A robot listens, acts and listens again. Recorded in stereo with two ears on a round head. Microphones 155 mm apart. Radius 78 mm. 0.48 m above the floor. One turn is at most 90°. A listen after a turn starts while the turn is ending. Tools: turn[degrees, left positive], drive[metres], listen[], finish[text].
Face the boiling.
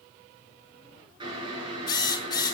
Thought: The boiling: about 30° right or 150° right.
Action: turn[-30]
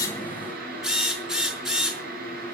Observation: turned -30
Thought: So it is at 120° right.
Action: turn[-90]
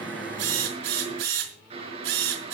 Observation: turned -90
Thought: The boiling is now 35° right.
Action: turn[-35]
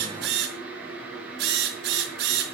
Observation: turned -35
Thought: The boiling is now 10° right.
Action: turn[-10]
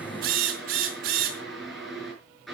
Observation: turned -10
Action: finish[Facing the boiling.]